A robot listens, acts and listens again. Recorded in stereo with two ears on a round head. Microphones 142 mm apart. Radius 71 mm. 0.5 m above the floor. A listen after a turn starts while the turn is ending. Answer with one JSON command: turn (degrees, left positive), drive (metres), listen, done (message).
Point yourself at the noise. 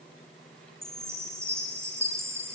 {"turn": -15}
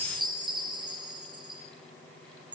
{"turn": -150}
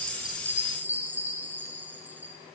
{"turn": -10}
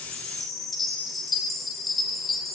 {"done": "Facing the chime."}